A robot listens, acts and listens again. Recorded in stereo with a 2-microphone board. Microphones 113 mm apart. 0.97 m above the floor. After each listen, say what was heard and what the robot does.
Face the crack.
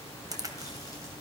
The crack: about 35° right or 145° right. Turn 35° right.
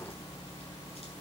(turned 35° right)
Keep listening.
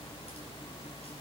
I heard a crack, but can't make it out now. It was about straight ahead or 110° right.